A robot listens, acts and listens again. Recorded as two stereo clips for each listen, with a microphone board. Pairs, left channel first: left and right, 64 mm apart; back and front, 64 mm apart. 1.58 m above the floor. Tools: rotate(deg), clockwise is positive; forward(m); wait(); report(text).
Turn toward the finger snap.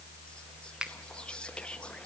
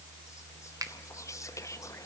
rotate(15)
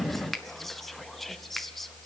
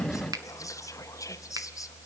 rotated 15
report("Facing the finger snap.")